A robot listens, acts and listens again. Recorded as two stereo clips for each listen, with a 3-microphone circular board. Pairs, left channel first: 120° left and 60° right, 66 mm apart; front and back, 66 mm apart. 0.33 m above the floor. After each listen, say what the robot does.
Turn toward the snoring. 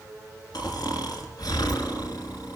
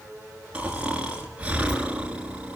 Turn 110° left.
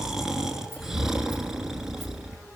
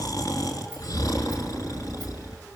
Turn 25° left.
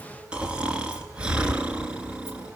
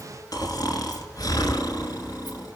Turn 15° left.
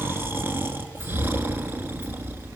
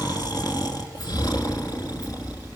Facing the snoring.